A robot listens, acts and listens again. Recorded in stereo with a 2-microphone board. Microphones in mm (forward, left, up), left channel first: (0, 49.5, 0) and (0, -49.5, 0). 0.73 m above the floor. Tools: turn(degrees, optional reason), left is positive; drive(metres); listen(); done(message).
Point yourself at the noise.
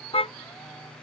turn(degrees=70, reason="The car horn: about 70° left or 110° left.")
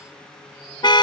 turn(degrees=45, reason="So it is at 45° left.")
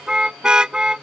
turn(degrees=-10, reason="The car horn is now 10° right.")
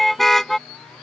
done("Found it: a car horn, straight ahead.")